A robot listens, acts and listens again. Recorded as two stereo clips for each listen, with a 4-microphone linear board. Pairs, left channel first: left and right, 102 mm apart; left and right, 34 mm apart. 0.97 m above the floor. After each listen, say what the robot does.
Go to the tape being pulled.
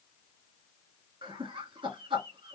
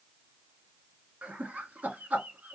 Keep listening.
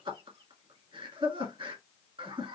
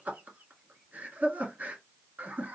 Keep listening.
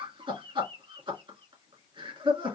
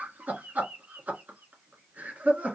I can't make out tape being pulled to turn to.